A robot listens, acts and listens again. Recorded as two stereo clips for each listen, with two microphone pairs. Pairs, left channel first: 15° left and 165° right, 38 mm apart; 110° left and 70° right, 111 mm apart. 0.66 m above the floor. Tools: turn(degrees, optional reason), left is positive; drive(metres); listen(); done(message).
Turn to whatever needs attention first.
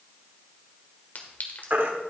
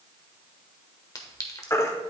turn(degrees=170, reason="The baby crying: 170° left.")
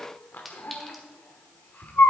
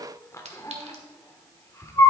turn(degrees=45, reason="The baby crying is now 45° left.")
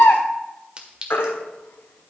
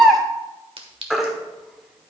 turn(degrees=15, reason="The baby crying is now 15° left.")
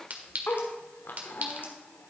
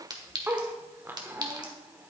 listen()
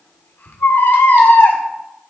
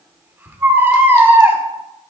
done("Found it: a baby crying, straight ahead.")